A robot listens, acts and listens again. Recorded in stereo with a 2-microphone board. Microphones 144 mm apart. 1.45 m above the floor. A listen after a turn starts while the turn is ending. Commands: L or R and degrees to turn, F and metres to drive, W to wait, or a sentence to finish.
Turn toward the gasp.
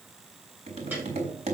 W
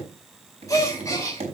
L20
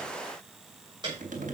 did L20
W
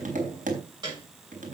I heard a gasp, but can't make it out now. It was about straight ahead or 140° left.